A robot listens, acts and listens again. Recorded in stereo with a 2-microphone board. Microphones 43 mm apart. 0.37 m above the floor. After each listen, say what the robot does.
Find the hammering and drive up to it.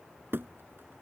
Turn 60° right.
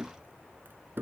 Turn 60° right.
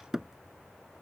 Turn 15° right.
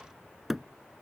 Drive 1.0 m forward.
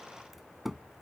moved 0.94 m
Drive 1.0 m forward.
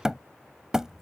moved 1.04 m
Turn 15° right.
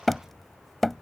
Drive 1.0 m forward.
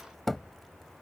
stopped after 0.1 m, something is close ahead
Arrived at the hammering, straight ahead.